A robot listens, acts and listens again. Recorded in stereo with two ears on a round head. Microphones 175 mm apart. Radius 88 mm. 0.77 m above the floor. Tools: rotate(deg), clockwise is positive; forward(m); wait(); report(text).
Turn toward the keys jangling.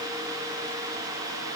wait()
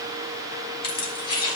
rotate(-25)
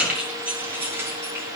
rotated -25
rotate(15)
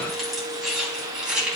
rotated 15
report("Facing the keys jangling, over 4 m away.")